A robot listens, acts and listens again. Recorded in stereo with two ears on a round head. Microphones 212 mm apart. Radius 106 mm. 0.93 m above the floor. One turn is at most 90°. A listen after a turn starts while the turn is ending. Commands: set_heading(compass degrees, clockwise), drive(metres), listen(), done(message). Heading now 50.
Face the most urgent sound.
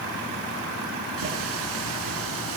listen()
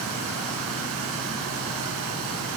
listen()
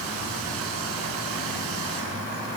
done("I can't make out anything urgent.")